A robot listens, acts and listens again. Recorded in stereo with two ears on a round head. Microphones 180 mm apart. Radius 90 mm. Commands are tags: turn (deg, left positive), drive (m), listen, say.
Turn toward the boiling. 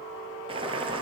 <turn deg="-25"/>
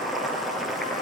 <say>Facing the boiling.</say>